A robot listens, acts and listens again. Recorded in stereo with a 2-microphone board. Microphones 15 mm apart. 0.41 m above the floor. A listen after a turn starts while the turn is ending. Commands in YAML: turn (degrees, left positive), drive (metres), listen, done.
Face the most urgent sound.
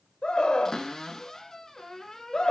turn: 60
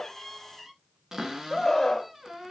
turn: 20
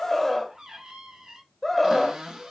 done: "Facing the scream."